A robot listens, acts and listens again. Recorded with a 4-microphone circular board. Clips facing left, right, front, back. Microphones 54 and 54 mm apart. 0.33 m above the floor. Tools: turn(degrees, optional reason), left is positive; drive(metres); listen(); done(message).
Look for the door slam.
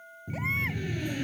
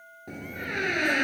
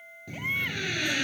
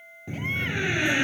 turn(degrees=-115, reason="The door slam: 115° right.")
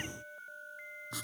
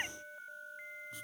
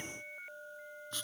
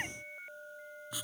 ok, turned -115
done("Facing where the door slam came from. I can't hear it now.")